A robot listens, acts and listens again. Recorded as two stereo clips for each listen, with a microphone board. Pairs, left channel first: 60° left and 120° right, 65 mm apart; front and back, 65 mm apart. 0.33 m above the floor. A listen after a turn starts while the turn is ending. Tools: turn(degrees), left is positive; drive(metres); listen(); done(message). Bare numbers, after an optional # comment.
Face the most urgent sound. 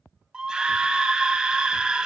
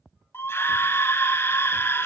# The scream: 45° right.
turn(-45)
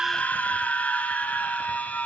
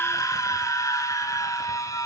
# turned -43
done("Found it: a scream, straight ahead.")